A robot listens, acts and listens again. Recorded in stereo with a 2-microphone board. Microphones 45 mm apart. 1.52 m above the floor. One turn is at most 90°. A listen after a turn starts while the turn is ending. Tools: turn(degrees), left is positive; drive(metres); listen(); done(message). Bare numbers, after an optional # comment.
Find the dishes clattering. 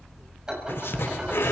# The dishes clattering: about 15° right or 165° right.
turn(-15)
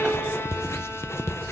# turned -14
listen()
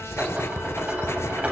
# So it is at 150° right.
turn(-90)
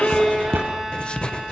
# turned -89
# Nothing new. It was at 60° right.
turn(-60)
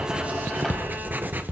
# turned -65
listen()
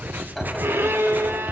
done("Found it: dishes clattering, straight ahead.")